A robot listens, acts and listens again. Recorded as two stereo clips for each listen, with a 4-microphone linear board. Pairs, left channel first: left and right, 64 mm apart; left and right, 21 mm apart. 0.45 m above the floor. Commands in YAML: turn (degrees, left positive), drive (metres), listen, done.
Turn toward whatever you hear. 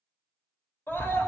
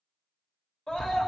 turn: 35
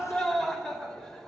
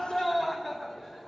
done: "Facing the scream, 1 to 2 m away."